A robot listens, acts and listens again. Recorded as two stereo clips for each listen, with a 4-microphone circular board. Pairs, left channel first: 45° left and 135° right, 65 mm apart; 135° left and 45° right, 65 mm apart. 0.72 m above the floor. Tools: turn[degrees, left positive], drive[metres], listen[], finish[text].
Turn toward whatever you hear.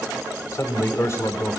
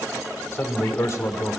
Thought: The man speaking: 95° left.
Action: turn[95]
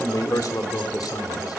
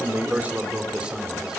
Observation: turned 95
Thought: The man speaking is now 30° left.
Action: turn[30]
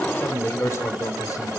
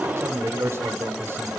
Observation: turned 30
Action: finish[Facing the man speaking, 2 to 4 m away.]